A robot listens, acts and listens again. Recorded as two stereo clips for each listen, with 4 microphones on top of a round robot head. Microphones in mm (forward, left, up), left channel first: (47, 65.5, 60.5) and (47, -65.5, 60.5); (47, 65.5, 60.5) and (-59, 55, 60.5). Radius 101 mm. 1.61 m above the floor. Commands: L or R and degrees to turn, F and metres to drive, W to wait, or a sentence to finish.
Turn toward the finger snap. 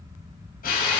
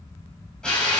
W
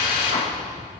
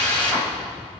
W
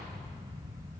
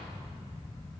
I can't make out a finger snap, only a drill.